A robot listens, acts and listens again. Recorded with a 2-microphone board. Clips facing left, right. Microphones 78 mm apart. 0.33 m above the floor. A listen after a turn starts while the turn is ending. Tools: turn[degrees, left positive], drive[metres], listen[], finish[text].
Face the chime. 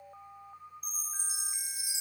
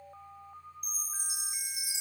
Thought: The chime: about 60° right or 120° right.
Action: turn[-60]
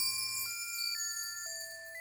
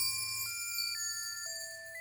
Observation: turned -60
Action: finish[Facing the chime.]